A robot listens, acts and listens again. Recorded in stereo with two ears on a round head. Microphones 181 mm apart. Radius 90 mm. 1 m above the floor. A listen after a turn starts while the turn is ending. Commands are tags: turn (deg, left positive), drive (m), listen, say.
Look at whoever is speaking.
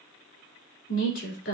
<turn deg="55"/>
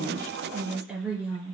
<say>Found it: a woman speaking, straight ahead, 2 to 4 m away.</say>